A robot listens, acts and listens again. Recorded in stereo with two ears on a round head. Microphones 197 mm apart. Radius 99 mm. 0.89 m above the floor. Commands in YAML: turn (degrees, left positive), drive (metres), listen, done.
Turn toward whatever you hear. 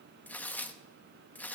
turn: 30
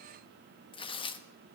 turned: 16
turn: 155
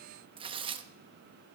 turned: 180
turn: -25
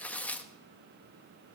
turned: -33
done: "Facing the tearing paper, under 1 m away."